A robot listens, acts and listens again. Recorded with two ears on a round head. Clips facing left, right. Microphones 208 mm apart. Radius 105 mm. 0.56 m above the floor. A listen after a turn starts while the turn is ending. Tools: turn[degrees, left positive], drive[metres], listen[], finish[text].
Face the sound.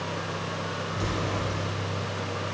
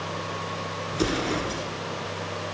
Action: turn[-90]
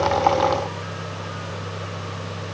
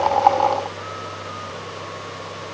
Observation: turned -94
Action: finish[Facing where the explosion came from. I can't hear it now.]